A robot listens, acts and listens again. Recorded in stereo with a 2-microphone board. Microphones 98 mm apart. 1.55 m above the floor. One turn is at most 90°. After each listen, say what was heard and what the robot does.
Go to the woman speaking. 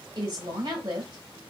The woman speaking: about 45° right or 135° right. Turn 45° right.
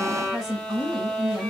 Drive 1.0 m forward.
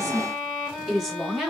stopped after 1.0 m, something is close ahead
I am next to the woman speaking.